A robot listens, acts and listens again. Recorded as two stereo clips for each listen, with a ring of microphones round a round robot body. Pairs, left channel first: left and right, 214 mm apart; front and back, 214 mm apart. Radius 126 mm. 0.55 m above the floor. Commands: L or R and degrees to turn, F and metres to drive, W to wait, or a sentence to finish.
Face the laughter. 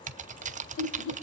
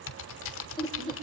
L65
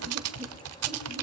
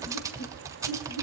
W
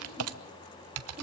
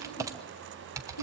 R25
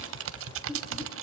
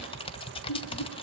L10
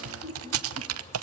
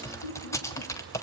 Found it: laughter, straight ahead, over 4 m away.